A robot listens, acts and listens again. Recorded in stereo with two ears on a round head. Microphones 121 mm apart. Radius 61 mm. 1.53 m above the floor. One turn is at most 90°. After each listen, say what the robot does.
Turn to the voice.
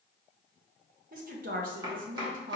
Turn 65° right.
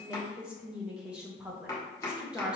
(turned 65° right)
Turn 10° right.
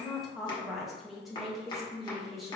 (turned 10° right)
Facing the woman speaking, 1 to 2 m away.